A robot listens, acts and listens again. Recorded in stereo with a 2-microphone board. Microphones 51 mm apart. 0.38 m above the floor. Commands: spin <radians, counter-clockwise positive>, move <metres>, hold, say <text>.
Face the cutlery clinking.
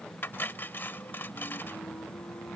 spin 0.79
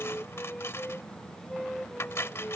spin 1.40
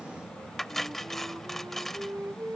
say Found it: cutlery clinking, straight ahead.